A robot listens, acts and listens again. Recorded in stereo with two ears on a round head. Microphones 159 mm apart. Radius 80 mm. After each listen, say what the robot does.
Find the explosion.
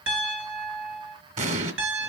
Turn 40° right.
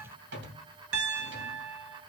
Keep listening.
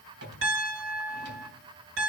I heard an explosion, but can't make it out now. It was about straight ahead or 100° right.